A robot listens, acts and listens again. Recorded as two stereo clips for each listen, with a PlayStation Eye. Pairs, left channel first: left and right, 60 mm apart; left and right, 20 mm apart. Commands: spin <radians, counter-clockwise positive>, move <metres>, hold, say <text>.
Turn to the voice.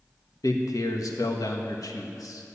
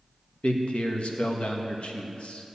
spin 1.57
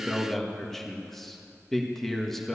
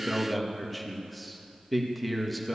say Facing the man speaking, 1 to 2 m away.